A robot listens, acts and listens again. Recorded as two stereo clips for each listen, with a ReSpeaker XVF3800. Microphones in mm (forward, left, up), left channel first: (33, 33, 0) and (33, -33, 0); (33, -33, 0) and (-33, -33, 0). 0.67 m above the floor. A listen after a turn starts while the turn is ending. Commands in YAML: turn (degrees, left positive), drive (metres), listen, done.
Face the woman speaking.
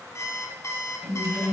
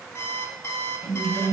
done: "Found it: a woman speaking, straight ahead, 2 to 4 m away."